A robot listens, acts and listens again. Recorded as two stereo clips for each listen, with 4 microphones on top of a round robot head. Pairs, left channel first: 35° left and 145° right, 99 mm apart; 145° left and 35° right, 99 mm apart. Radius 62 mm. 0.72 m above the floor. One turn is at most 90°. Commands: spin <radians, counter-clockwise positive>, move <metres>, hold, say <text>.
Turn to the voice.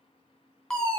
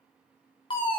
hold
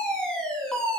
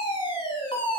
hold
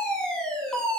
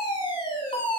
say I can't make out anyone speaking to turn to.